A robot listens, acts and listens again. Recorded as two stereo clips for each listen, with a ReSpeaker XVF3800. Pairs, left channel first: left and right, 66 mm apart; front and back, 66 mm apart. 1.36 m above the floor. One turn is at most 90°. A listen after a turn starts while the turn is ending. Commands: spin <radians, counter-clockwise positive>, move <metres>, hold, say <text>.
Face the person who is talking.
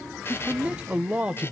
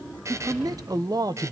spin -1.57
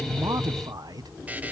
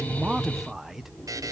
spin -1.57
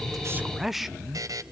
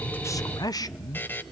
say Found it: a man speaking, straight ahead.